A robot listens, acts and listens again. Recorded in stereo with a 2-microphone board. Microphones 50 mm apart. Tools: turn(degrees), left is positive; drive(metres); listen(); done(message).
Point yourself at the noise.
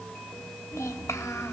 turn(degrees=90)
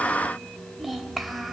done("Found it: a child speaking, straight ahead, 1 to 2 m away.")